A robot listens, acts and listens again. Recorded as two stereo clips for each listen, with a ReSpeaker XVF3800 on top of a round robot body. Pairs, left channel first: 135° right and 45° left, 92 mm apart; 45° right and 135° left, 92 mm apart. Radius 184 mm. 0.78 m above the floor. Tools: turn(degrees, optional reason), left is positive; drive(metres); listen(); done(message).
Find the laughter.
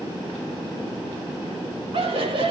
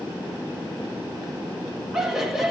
turn(degrees=50, reason="The laughter: 50° left.")
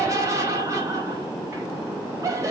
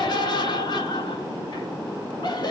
turn(degrees=-10, reason="The laughter is now 10° right.")
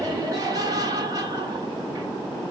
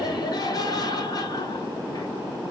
done("Facing the laughter, 1 to 2 m away.")